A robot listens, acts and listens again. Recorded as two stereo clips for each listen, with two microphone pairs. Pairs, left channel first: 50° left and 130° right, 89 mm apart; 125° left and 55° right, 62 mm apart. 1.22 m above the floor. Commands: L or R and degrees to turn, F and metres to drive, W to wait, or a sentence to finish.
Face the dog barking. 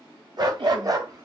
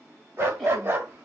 R100
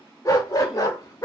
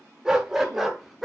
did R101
L35
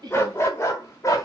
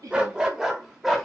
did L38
L35
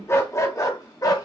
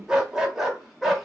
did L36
L30
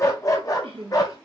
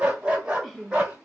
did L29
L15
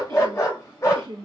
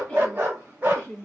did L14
Found it: a dog barking, straight ahead.